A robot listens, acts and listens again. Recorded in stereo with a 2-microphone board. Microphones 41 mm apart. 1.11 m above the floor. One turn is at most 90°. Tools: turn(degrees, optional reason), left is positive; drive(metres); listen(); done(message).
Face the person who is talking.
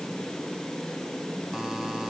listen()
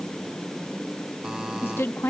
turn(degrees=90)
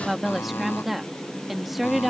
done("Facing the woman speaking.")